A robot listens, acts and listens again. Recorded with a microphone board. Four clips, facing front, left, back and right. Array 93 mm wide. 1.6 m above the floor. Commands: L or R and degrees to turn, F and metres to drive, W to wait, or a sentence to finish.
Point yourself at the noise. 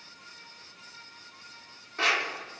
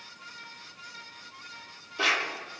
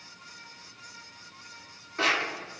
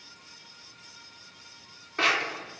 R95
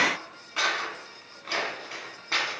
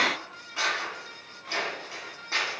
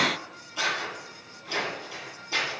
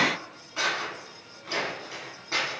Found it: scissors, straight ahead.